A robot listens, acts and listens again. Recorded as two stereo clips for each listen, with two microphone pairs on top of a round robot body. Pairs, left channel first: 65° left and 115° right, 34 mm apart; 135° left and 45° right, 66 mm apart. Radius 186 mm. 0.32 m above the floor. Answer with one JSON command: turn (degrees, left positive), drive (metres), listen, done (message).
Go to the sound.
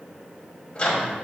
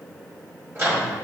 {"drive": 1.0}
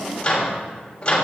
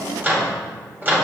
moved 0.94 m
{"drive": 1.0}
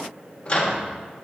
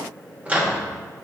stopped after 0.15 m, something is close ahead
{"turn": 10}
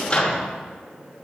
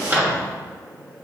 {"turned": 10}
{"done": "I am next to the microwave."}